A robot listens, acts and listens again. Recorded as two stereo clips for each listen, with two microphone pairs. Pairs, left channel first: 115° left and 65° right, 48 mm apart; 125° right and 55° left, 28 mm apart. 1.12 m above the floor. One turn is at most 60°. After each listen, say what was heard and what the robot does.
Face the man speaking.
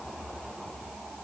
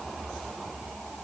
Keep listening.
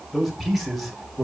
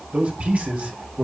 The man speaking: 20° left. Turn 20° left.
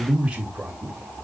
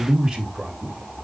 Facing the man speaking, 2 to 4 m away.